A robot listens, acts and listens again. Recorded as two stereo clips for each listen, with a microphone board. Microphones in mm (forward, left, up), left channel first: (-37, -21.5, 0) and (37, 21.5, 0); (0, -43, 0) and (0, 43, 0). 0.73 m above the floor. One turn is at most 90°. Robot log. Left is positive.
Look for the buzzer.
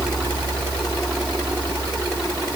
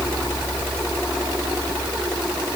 cmd idle
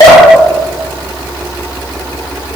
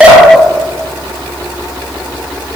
cmd idle
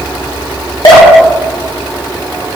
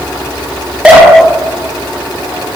end: I can't make out a buzzer to turn to.